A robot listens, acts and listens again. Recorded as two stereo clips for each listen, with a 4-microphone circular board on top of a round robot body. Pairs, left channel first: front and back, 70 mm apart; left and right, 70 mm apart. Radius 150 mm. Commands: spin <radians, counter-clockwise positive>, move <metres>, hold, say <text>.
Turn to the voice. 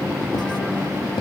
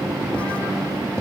hold
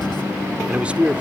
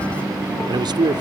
spin -1.83
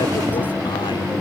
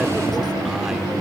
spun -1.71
hold
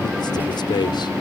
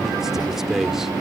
say Facing the man speaking.